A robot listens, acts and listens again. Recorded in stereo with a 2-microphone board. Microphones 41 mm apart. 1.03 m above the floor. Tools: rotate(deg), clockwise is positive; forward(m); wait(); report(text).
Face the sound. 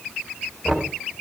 rotate(-30)
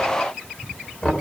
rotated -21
rotate(-155)
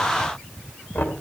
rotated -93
rotate(-60)
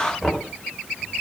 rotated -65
report("Facing the knocking, 2 to 4 m away.")